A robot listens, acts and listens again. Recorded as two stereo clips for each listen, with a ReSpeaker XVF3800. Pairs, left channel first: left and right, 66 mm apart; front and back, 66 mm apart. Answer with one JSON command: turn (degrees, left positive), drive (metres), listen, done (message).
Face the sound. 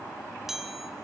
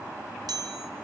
{"turn": -175}
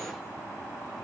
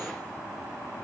{"listen": true}
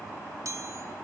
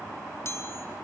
{"turn": -50}
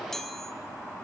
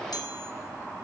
{"listen": true}
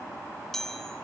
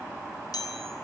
{"done": "Found it: a chime, straight ahead, 1 to 2 m away."}